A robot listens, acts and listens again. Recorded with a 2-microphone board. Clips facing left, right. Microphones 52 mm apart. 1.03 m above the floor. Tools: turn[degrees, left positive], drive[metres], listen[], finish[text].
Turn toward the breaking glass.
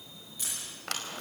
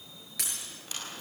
Action: turn[-90]
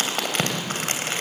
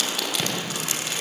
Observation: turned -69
Thought: Nothing new. It was at 20° right.
Action: turn[-20]
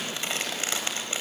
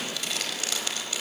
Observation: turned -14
Action: finish[I heard breaking glass from this way, but can't make it out now.]